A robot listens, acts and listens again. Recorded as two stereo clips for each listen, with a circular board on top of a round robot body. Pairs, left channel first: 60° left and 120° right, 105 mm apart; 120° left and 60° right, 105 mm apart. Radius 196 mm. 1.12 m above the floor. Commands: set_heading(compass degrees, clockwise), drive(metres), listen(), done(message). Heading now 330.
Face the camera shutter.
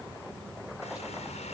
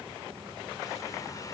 listen()
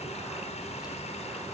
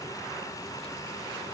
listen()
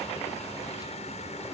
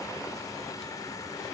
done("I can't make out a camera shutter, only a running tap.")